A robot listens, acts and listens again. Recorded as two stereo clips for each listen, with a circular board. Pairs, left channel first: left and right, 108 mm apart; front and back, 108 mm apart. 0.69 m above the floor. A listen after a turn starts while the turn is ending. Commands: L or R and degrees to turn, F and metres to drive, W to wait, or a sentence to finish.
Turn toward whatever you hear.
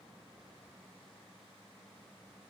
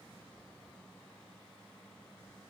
W
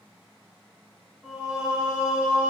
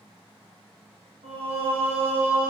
R165
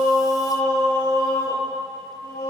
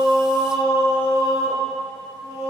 R10
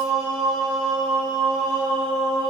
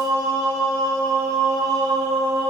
Facing the singing.